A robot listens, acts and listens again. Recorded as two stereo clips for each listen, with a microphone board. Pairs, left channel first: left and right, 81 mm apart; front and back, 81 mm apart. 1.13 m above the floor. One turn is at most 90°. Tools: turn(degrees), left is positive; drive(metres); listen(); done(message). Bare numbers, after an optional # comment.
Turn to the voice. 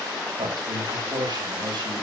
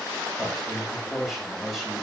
# The man speaking: 90° right.
turn(-90)
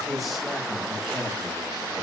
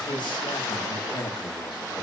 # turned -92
done("Found it: a man speaking, straight ahead, over 4 m away.")